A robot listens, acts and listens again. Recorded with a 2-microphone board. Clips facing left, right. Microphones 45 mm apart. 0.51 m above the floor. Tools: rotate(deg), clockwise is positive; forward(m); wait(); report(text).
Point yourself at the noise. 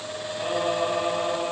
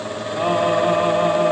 rotate(35)
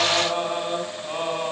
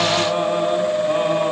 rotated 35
wait()
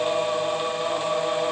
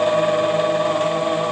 report("Facing the singing, 2 to 4 m away.")